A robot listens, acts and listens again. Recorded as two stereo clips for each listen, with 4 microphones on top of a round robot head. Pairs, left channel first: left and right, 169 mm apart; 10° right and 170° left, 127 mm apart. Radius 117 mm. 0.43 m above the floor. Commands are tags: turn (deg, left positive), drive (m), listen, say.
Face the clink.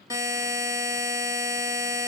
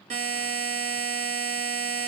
<listen/>
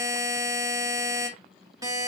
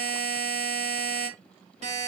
<listen/>
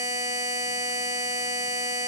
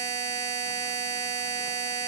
<say>I can't make out a clink, only a buzzer.</say>